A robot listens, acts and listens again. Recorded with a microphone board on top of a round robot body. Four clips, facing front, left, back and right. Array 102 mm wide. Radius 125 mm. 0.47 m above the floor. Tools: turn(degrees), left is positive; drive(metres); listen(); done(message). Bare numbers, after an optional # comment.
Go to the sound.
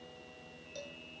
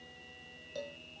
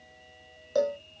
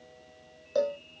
# The cowbell: 145° right.
turn(-145)
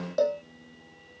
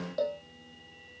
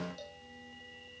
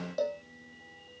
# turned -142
drive(1.0)
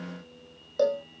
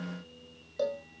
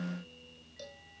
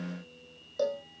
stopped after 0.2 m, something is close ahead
done("Something is in my way. I am facing the cowbell but have not reached it.")